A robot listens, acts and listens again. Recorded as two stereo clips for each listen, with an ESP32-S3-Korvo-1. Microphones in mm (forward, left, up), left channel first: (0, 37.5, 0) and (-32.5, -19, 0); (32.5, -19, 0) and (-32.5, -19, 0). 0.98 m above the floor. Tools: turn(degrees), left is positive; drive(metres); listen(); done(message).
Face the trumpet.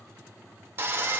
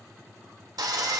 listen()
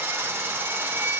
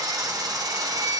listen()
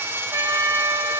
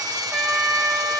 turn(degrees=-95)
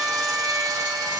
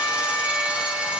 turn(degrees=-30)
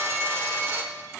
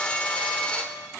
listen()
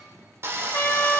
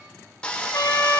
turn(degrees=10)
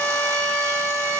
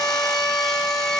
done("Facing the trumpet, under 1 m away.")